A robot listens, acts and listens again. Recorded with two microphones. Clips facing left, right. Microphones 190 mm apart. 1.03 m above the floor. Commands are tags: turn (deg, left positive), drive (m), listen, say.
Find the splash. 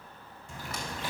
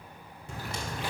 <turn deg="-70"/>
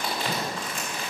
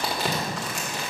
<listen/>
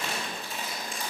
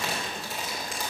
<say>I heard a splash, but can't make it out now. It was about straight ahead or 40° right.</say>